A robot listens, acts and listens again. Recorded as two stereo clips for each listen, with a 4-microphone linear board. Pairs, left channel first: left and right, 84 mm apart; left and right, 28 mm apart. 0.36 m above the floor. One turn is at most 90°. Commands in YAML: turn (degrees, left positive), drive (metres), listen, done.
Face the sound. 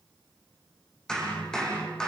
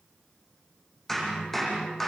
turn: 30
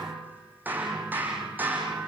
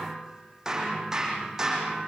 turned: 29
turn: -20
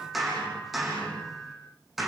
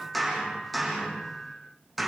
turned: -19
done: "Facing the hammering, over 4 m away."